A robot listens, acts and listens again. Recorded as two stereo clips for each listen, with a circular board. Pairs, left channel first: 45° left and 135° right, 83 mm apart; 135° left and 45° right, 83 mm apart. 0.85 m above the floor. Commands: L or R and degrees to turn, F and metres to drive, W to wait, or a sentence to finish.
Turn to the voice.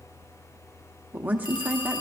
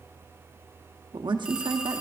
R65
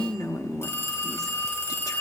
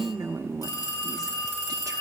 Found it: a woman speaking, straight ahead.